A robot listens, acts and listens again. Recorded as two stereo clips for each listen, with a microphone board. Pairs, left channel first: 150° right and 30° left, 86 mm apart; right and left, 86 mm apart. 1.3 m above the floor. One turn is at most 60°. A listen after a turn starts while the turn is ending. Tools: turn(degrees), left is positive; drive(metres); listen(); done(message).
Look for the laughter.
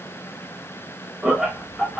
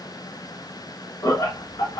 turn(degrees=-60)
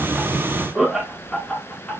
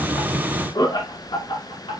turn(degrees=-60)
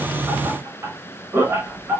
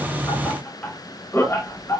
turn(degrees=-35)
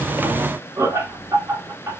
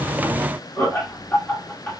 turn(degrees=-20)
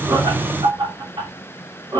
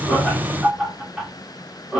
done("Found it: laughter, straight ahead, 2 to 4 m away.")